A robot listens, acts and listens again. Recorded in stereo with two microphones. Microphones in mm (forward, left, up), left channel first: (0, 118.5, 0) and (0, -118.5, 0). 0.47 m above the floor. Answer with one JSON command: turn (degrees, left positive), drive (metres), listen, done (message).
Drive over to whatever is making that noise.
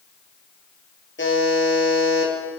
{"turn": 55}
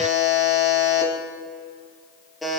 {"drive": 1.0}
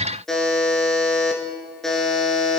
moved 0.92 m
{"drive": 1.0}
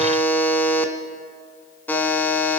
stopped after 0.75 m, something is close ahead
{"turn": 10}
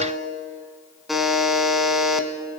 {"done": "Arrived at the buzzer, straight ahead."}